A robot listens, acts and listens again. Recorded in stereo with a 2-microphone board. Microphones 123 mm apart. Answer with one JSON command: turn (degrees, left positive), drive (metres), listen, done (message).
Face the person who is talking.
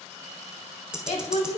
{"turn": 65}
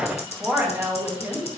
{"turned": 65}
{"turn": -25}
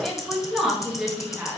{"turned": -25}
{"turn": -10}
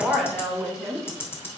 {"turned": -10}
{"turn": -10}
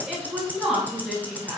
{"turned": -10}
{"done": "Facing the woman speaking."}